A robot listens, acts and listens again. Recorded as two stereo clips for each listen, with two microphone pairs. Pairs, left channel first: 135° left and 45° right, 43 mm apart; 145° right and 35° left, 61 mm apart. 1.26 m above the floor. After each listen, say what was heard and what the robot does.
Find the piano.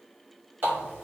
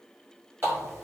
Keep listening.
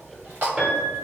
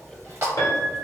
The piano: 115° right. Turn 115° right.
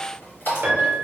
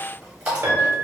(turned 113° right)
Found it: a piano, straight ahead.